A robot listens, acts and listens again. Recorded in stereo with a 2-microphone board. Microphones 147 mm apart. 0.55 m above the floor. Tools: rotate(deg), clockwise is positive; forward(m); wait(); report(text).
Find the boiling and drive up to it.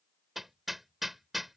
wait()
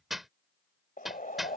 rotate(-75)
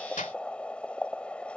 rotate(-10)
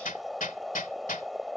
forward(1.0)
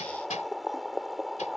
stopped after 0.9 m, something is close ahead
report("I am next to the boiling.")